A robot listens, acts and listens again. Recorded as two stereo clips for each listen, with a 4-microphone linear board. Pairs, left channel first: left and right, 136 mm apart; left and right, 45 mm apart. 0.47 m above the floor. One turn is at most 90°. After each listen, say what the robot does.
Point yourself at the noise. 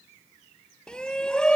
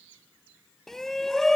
Turn 30° left.
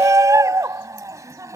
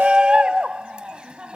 Turn 25° right.
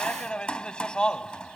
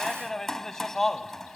Facing the shout.